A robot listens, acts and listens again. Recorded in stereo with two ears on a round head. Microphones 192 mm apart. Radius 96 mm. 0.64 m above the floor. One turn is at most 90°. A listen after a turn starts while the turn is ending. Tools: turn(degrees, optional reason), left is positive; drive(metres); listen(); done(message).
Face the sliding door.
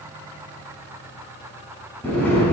turn(degrees=30)
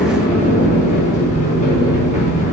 turn(degrees=90, reason="So it is at 145° left.")
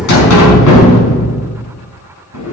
turn(degrees=75, reason="The sliding door is now 75° left.")
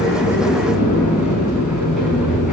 done("Facing the sliding door.")